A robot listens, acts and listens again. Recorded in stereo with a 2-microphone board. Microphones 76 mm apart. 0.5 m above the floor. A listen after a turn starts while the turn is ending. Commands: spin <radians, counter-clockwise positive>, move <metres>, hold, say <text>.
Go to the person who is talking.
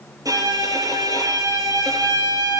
hold
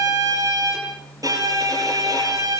hold
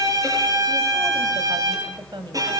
spin -1.22
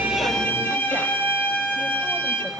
hold
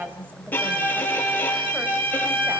spin -0.44
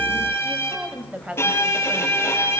spin -0.26
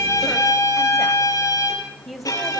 move 1.0
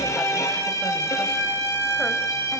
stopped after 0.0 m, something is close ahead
hold
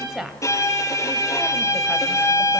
say Blocked. The woman speaking is further on, straight ahead.